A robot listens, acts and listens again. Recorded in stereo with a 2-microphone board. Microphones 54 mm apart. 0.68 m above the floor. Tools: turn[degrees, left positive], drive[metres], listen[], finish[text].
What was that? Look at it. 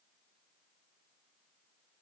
Action: listen[]
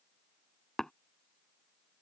Action: turn[30]
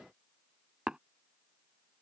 Thought: So it is at 15° right.
Action: turn[-15]
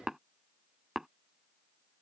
Thought: The tapping is now 10° right.
Action: turn[-10]
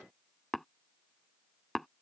Action: finish[Found it: tapping, straight ahead.]